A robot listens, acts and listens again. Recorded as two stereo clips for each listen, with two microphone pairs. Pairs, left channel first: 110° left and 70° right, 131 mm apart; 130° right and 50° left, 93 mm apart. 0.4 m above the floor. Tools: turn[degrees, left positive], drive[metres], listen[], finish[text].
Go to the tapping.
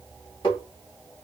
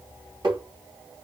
Thought: The tapping: 65° left.
Action: turn[65]
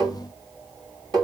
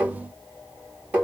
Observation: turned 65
Thought: The tapping is now 20° right.
Action: turn[-20]
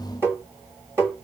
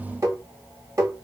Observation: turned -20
Action: drive[1.0]
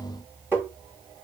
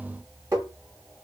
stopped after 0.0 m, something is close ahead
Action: finish[Blocked. The tapping is further on, straight ahead.]